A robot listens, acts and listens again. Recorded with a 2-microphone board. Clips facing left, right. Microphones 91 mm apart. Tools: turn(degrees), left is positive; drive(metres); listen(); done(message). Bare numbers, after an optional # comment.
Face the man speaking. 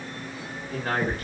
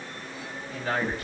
# The man speaking: about 50° left or 130° left.
turn(50)
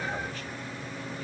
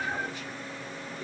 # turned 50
listen()
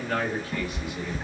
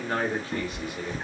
# So it is at 45° right.
turn(-45)
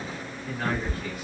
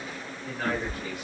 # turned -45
# The man speaking is now 15° right.
turn(-15)
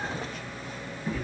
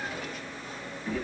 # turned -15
listen()
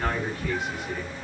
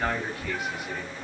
done("Facing the man speaking.")